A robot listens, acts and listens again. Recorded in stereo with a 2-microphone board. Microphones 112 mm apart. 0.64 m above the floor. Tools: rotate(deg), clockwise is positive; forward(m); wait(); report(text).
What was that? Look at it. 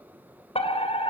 rotate(-60)
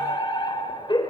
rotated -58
rotate(-50)
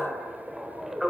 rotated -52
report("Facing the fire alarm.")